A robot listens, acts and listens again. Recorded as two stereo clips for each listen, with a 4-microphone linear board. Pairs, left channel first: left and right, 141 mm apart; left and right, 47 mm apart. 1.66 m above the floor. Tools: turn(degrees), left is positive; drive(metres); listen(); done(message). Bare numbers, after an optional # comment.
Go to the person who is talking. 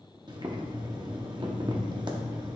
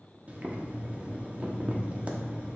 listen()
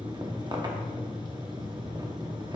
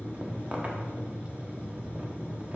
listen()
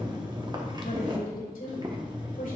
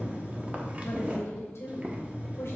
turn(90)
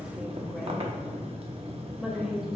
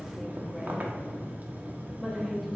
drive(1.0)
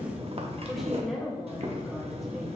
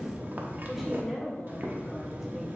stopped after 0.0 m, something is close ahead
done("Blocked. The woman speaking is further on, straight ahead.")